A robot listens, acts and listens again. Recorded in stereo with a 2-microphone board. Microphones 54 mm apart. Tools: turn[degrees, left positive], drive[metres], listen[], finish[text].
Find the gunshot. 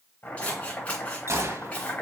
Thought: The gunshot: about 60° right or 120° right.
Action: turn[-60]
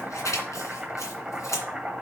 Action: listen[]
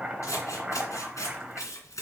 Action: finish[I heard a gunshot, but can't make it out now. It was about straight ahead or 60° right.]